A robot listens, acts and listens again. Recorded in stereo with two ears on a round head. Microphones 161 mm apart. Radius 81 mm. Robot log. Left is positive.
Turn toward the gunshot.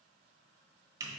cmd idle
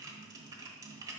cmd idle
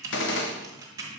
note: The gunshot: about 75° left or 105° left.
cmd yaw +75
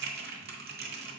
cmd idle
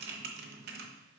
end: I heard a gunshot, but can't make it out now. It was about straight ahead or 30° left.